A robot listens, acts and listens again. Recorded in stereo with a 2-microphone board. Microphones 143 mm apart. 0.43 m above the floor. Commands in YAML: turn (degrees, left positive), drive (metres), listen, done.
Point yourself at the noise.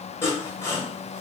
turn: 20
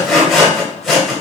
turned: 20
done: "Found it: sawing, straight ahead."